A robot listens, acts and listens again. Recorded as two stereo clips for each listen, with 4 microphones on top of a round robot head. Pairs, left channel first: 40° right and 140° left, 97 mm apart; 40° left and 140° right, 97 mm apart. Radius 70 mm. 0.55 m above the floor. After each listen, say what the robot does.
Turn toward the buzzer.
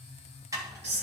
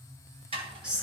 Keep listening.
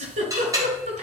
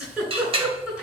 Keep listening.
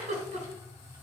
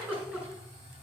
I can't make out a buzzer to turn to.